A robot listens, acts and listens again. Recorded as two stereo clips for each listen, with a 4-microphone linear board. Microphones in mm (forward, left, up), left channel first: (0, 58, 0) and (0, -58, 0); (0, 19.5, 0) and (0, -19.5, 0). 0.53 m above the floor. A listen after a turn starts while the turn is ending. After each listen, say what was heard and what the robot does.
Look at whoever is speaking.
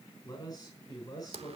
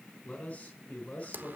The man speaking: about 30° left or 150° left. Turn 30° left.
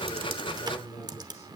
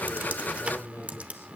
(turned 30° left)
So it is at 115° left. Turn 115° left.
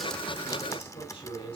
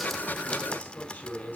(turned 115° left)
The man speaking is now 45° left. Turn 45° left.
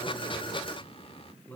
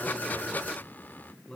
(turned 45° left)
The man speaking is now 15° left. Turn 15° left.
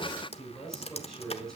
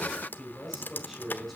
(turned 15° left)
Found it: a man speaking, straight ahead, over 4 m away.